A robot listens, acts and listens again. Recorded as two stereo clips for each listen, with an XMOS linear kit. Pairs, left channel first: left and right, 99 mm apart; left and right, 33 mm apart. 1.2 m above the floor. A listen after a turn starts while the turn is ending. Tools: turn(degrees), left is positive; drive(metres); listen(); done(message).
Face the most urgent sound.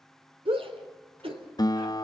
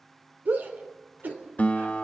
turn(degrees=-70)
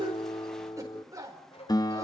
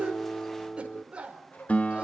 turn(degrees=-35)
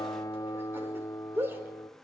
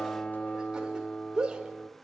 turn(degrees=-25)
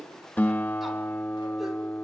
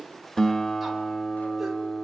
listen()
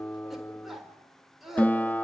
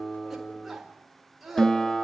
done("Facing the shout.")